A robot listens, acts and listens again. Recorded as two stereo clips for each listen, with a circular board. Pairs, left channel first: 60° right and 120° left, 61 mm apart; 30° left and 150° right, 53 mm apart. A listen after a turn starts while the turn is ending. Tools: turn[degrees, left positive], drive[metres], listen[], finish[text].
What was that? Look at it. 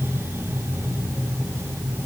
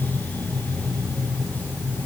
Action: listen[]
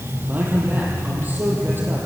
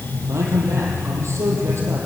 Thought: The man speaking: straight behind.
Action: turn[180]
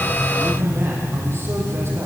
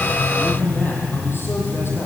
Thought: The man speaking is now 70° left.
Action: turn[70]
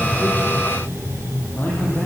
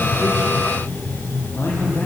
Action: listen[]
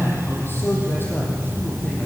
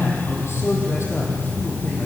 Action: listen[]
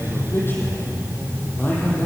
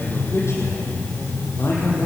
Action: finish[Found it: a man speaking, straight ahead.]